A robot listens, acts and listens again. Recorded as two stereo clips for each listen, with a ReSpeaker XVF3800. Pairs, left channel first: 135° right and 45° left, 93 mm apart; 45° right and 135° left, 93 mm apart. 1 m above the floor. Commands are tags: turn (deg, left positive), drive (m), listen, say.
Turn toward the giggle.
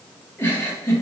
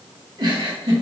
<turn deg="160"/>
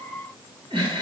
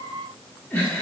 <turn deg="20"/>
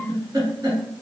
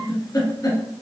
<say>Facing the giggle.</say>